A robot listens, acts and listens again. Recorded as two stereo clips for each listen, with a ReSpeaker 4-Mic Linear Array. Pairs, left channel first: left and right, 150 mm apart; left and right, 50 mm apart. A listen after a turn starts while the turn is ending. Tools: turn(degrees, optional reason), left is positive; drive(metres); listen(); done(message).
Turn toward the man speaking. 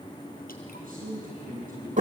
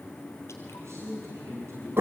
turn(degrees=-70, reason="The man speaking: about 70° right or 110° right.")
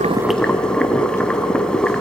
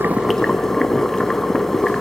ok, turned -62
listen()
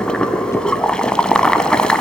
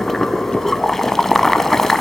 listen()
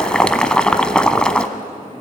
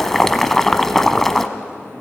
done("I heard a man speaking, but can't make it out now. It was about 10° right or 50° right.")